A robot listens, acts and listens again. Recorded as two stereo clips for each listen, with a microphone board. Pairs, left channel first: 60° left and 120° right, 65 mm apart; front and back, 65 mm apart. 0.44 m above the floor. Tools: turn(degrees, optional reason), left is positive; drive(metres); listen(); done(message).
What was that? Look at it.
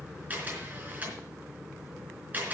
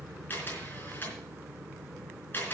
turn(degrees=-55, reason="The camera shutter: 55° right.")
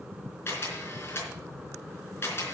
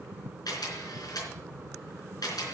turn(degrees=10, reason="The camera shutter is now 10° left.")
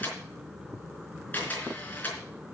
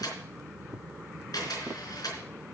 done("Found it: a camera shutter, straight ahead.")